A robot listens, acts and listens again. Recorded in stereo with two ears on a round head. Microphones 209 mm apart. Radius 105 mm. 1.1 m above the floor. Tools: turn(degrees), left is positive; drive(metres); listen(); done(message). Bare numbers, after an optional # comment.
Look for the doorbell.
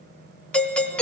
turn(30)
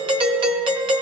# So it is at 25° right.
turn(-25)
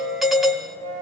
done("Found it: a doorbell, straight ahead, 1 to 2 m away.")